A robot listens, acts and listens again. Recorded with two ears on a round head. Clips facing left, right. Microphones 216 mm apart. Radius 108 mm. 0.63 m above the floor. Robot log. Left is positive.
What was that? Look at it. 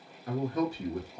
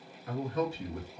note: The man speaking: about 35° left or 145° left.
cmd yaw +35
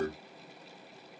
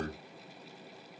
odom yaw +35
note: So it is at 105° left.
cmd yaw +105
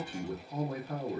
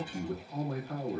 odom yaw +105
note: The man speaking is now 20° left.
cmd yaw +20
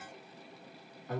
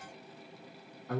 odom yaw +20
end: Facing the man speaking.